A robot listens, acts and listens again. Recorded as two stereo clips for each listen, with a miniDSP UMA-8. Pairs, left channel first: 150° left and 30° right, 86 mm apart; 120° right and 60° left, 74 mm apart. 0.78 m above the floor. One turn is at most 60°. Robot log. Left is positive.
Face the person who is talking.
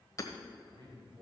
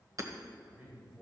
end: Found it: a man speaking, straight ahead.